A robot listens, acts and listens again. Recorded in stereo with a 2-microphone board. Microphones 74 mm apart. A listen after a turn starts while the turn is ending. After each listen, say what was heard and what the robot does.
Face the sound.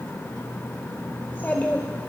The child speaking: about 25° left or 155° left. Turn 25° left.
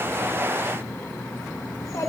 So it is at 130° left. Turn 130° left.
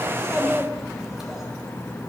Facing the child speaking.